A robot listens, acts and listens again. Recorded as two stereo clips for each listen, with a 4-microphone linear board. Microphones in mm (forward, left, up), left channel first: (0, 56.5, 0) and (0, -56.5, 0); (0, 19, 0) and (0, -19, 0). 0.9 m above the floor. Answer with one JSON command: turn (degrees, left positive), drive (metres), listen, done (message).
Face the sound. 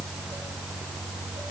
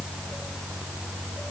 {"listen": true}
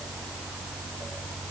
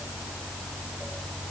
{"listen": true}
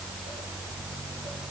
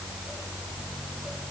{"done": "I can't make out anything to turn to."}